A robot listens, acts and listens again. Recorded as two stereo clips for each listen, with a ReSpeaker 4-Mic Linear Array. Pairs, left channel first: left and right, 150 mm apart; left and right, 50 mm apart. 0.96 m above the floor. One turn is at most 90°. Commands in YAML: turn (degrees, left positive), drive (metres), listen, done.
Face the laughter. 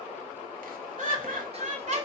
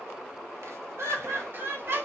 turn: -55
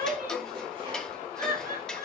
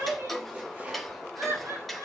turn: -75
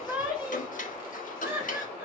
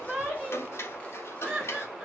turn: -10
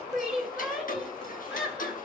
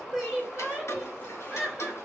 done: "Found it: laughter, straight ahead, over 4 m away."